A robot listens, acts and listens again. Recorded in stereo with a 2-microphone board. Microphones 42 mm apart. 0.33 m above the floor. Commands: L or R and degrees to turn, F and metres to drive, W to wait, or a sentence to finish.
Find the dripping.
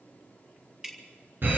R30
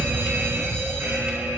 W
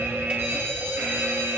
W
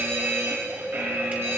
I heard dripping, but can't make it out now. It was about 20° left or 140° right.